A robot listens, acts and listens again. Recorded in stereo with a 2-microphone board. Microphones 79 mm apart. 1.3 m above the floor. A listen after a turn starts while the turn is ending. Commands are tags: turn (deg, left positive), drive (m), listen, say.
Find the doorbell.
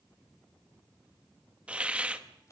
<listen/>
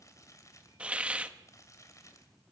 <listen/>
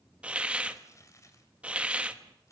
<say>I can't make out a doorbell to turn to.</say>